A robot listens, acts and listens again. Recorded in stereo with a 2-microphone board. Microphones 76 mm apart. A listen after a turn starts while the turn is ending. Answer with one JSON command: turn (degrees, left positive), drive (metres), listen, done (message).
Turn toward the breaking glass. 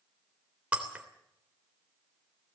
{"turn": -15}
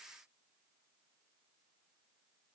{"listen": true}
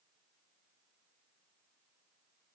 {"done": "I heard breaking glass, but can't make it out now. It was about straight ahead or 150° right."}